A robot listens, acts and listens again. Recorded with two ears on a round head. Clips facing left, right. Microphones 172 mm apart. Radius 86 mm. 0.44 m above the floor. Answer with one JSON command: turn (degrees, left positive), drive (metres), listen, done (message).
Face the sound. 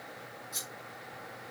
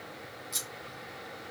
{"turn": -30}
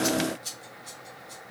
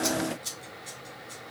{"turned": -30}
{"done": "Found it: scissors, straight ahead."}